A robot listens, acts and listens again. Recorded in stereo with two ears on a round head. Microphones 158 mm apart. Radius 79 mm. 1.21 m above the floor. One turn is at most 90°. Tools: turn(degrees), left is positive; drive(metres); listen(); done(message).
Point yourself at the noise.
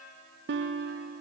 turn(degrees=-70)
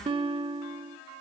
turn(degrees=-30)
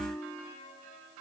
turn(degrees=10)
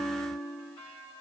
done("Facing the guitar.")